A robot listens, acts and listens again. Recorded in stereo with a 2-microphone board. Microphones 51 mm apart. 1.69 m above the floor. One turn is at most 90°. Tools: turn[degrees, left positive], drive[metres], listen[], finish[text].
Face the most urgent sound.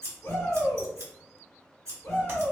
Thought: The shout: about 65° left or 115° left.
Action: turn[65]
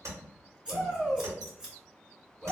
Thought: So it is at 15° left.
Action: turn[15]
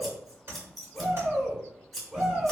Action: finish[Found it: a shout, straight ahead, 1 to 2 m away.]